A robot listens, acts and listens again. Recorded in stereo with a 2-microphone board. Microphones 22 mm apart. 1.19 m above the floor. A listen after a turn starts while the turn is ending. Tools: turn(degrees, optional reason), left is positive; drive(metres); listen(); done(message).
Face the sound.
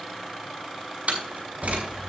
turn(degrees=-90)
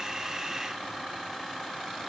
done("Facing where the door slam came from. I can't hear it now.")